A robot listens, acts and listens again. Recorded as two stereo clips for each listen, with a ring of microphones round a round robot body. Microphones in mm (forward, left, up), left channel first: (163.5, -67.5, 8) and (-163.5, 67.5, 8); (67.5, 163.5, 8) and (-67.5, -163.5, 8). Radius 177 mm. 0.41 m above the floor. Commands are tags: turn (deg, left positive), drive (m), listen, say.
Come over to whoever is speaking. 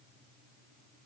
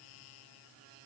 <listen/>
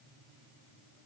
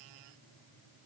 <listen/>
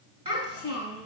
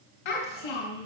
<turn deg="85"/>
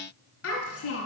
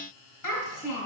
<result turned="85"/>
<turn deg="35"/>
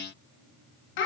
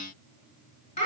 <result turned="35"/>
<drive m="1.0"/>
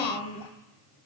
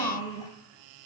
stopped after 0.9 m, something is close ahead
<say>Arrived at the child speaking, straight ahead.</say>